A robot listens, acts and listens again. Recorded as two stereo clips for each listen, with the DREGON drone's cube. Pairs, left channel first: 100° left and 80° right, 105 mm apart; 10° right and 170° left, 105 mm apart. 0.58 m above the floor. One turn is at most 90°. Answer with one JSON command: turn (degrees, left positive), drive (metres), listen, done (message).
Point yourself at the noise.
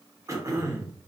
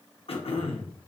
{"turn": -25}
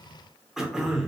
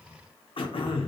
{"done": "Found it: throat clearing, straight ahead, under 1 m away."}